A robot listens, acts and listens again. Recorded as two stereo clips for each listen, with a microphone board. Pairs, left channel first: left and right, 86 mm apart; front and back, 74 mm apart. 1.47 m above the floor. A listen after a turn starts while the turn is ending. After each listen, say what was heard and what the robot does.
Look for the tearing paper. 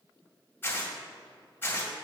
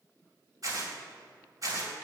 The tearing paper: 155° left. Turn 155° left.
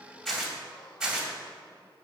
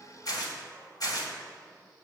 Facing the tearing paper, 2 to 4 m away.